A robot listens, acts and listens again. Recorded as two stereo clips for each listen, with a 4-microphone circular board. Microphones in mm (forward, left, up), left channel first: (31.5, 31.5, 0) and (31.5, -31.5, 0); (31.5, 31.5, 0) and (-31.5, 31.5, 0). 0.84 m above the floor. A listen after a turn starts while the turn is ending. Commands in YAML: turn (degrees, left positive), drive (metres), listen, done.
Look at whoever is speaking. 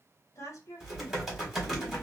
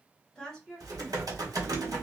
turn: 80
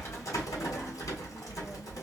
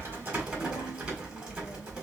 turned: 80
listen: true
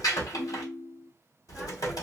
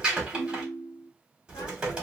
listen: true
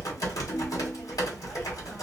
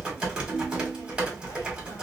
done: "I heard a woman speaking from this way, but can't make it out now."